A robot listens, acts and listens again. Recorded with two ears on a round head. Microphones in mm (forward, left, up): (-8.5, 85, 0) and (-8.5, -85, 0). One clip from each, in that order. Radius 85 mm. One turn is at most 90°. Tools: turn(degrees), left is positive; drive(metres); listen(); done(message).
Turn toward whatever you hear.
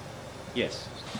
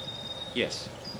turn(degrees=-20)
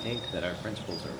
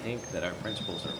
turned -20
turn(degrees=-30)
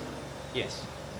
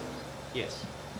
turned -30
done("Facing the man speaking.")